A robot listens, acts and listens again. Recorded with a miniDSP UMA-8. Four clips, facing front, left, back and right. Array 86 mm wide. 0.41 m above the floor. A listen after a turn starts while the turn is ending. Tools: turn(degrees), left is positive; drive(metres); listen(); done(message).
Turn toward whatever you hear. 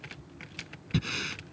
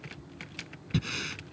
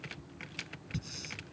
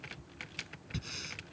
turn(degrees=30)
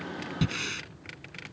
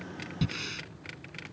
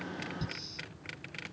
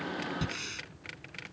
done("Facing the breathing.")